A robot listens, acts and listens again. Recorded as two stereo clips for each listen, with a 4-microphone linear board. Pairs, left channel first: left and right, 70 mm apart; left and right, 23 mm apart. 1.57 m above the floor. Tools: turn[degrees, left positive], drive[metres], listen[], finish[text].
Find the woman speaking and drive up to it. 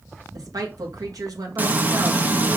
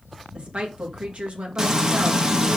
Thought: The woman speaking: about 60° right or 120° right.
Action: turn[-60]
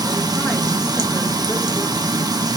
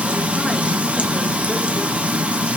Action: listen[]
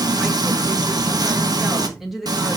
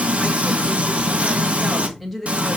Action: drive[1.0]
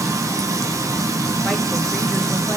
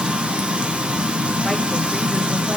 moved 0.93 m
Action: listen[]
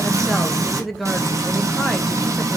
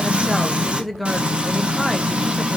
Action: drive[1.0]
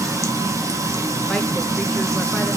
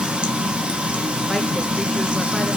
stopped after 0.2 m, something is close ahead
Action: listen[]
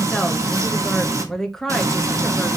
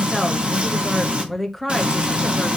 Action: finish[Arrived at the woman speaking, straight ahead.]